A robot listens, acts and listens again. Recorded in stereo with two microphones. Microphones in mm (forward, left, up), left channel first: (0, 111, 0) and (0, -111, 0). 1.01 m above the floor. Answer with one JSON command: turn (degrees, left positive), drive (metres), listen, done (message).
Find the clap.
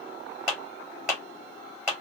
{"turn": 30}
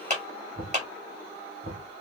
{"turn": -30}
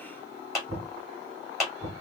{"done": "Facing the clap."}